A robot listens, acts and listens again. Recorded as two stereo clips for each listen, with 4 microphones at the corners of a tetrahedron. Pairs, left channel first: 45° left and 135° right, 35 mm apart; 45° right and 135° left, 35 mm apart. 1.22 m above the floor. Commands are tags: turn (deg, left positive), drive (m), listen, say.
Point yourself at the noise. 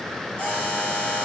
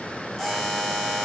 <turn deg="50"/>
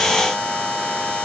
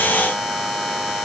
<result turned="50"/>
<turn deg="20"/>
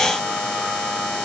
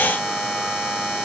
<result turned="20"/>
<say>Found it: a buzzer, straight ahead, over 4 m away.</say>